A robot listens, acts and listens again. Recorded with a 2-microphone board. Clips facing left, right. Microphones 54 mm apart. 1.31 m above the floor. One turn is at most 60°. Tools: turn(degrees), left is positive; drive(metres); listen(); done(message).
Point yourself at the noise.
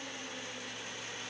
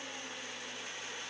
listen()
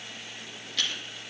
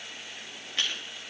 turn(degrees=-25)
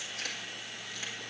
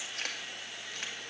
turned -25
turn(degrees=-60)
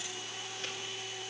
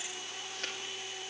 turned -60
turn(degrees=-60)
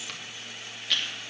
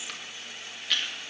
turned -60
done("Facing the chewing.")